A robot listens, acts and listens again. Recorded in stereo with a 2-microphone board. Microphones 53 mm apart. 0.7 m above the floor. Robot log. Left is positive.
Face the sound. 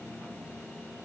cmd idle
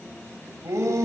note: The shout: about 70° right or 110° right.
cmd yaw -70
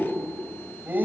note: So it is at 35° right.
cmd yaw -35
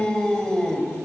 note: The shout is now 10° left.
cmd yaw +10
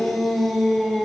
end: Facing the shout.